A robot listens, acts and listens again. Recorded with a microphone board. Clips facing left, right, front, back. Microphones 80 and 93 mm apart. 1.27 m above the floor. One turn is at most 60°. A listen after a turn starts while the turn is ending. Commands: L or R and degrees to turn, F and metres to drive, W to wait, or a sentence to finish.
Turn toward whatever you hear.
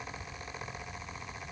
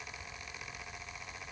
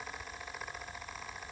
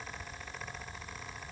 W
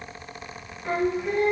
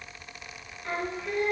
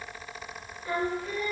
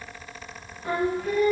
L60
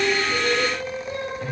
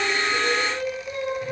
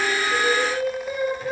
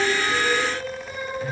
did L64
L60
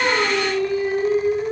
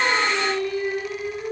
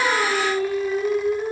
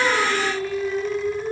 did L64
L35
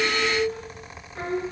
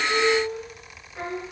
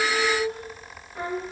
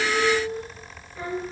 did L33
Facing the singing, 1 to 2 m away.